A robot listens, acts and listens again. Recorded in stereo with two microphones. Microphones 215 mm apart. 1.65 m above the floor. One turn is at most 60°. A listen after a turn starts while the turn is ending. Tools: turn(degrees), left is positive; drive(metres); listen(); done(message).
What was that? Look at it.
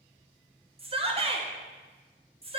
turn(degrees=-25)
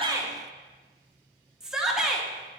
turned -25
done("Facing the shout.")